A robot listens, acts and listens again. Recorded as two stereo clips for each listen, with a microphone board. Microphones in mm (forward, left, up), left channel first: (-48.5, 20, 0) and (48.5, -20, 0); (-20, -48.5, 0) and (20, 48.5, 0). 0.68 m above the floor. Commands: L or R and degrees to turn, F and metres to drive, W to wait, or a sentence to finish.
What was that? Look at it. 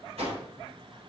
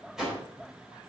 R15
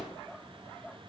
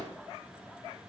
W
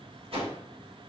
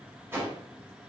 Found it: a whoosh, straight ahead.